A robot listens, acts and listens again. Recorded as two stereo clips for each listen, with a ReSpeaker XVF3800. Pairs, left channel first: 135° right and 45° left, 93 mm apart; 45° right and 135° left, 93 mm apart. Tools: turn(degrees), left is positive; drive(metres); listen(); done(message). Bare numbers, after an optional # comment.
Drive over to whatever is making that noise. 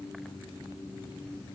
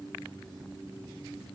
listen()
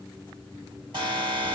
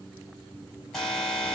# The alarm: 45° left.
turn(45)
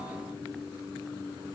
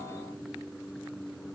listen()
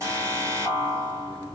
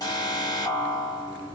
drive(1.0)
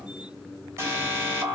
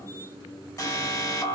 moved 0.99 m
drive(1.0)
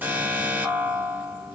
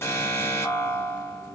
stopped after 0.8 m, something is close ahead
done("I am next to the alarm.")